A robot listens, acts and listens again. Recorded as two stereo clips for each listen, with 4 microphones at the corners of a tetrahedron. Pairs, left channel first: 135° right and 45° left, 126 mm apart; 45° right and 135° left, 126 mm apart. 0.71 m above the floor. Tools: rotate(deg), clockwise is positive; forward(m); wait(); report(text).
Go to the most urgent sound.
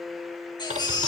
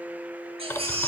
rotate(-175)
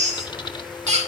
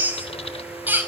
rotate(-60)
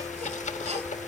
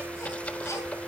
wait()
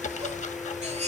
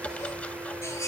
rotate(-20)
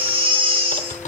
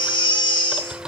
forward(1.0)
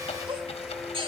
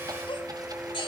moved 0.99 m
forward(1.0)
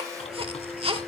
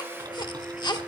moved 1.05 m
forward(1.0)
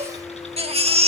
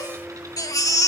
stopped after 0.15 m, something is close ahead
rotate(-15)
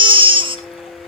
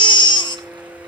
report("I am next to the baby crying.")